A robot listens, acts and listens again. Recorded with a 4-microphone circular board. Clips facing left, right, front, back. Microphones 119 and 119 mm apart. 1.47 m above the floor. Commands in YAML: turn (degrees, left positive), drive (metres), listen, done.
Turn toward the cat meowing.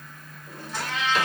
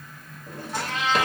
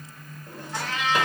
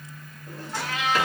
turn: -105
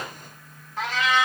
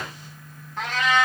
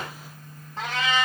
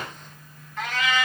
done: "Found it: a cat meowing, straight ahead."